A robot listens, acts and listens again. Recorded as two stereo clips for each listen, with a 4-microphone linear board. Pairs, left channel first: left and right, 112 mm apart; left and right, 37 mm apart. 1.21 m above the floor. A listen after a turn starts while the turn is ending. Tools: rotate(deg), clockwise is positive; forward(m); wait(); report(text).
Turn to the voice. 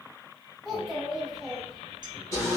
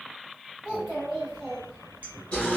rotate(-30)
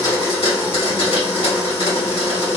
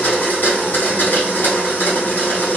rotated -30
wait()
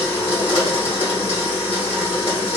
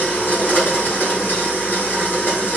wait()
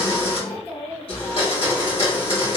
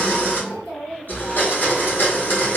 rotate(-155)
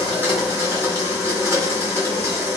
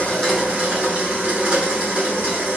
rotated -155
wait()
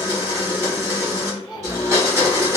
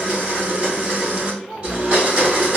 report("Found it: a child speaking, straight ahead, 2 to 4 m away.")